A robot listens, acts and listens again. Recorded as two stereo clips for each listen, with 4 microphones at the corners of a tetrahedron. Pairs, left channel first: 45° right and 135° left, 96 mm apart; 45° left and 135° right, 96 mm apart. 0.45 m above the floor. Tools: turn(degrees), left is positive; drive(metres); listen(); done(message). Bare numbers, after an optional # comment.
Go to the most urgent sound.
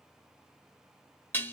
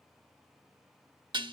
listen()
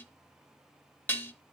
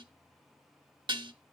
listen()
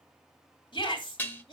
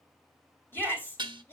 # The shout: 20° right.
turn(-20)
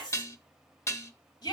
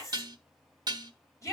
drive(1.0)
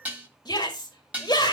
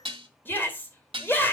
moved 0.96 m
# The shout is now 20° right.
turn(-20)
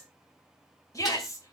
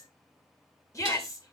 drive(1.0)
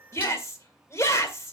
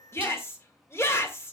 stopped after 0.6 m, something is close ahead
done("I am next to the shout.")